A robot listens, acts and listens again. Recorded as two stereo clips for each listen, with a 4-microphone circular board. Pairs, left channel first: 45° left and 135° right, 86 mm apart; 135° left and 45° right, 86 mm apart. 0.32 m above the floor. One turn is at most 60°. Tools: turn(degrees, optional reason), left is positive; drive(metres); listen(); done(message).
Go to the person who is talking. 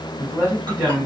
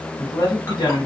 turn(degrees=60, reason="The man speaking: 160° left.")
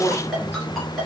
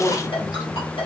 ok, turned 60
turn(degrees=60, reason="The man speaking is now 105° left.")
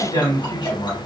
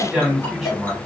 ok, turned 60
turn(degrees=40, reason="The man speaking is now 40° left.")
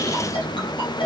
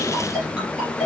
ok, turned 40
listen()
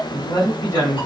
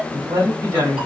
drive(metres=1.0)
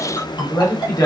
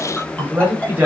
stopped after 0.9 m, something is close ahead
turn(degrees=15, reason="The man speaking is now 15° left.")
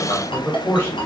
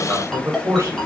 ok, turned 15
done("I am next to the man speaking.")